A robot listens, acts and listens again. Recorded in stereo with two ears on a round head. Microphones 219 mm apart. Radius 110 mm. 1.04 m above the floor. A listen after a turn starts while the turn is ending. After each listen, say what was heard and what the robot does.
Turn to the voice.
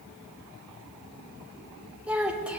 Turn 30° right.
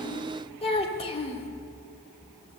So it is at 25° left. Turn 25° left.
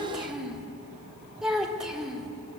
Found it: a child speaking, straight ahead.